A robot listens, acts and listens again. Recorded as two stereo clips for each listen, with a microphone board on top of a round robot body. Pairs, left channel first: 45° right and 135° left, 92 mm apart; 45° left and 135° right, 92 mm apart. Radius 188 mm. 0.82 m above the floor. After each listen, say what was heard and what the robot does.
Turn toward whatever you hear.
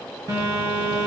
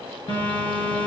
The phone buzzing: 80° left. Turn 80° left.
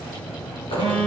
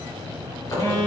The phone buzzing is now 10° right. Turn 10° right.
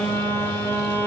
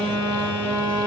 Facing the phone buzzing.